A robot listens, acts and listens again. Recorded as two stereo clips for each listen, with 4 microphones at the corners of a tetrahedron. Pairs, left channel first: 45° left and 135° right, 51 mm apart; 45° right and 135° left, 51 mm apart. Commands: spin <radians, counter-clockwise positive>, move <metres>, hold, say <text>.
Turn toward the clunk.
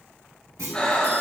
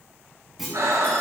spin -2.44
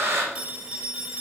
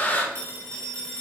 say I heard a clunk from this way, but can't make it out now.